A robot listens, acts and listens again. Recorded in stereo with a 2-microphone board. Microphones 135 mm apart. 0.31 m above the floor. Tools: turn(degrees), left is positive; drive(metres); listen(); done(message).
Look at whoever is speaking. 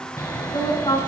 turn(degrees=35)
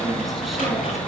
listen()
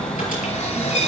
listen()
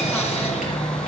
done("I heard a woman speaking, but can't make it out now. It was about straight ahead or 110° left.")